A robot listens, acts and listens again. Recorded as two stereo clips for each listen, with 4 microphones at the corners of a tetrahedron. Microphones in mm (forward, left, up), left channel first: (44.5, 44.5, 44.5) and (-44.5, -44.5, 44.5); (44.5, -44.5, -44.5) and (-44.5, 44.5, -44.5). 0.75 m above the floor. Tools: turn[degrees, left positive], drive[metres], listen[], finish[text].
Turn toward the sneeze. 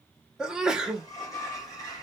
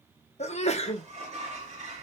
Thought: The sneeze: 50° right.
Action: turn[-50]
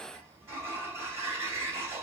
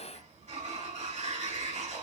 Action: finish[Facing where the sneeze came from. I can't hear it now.]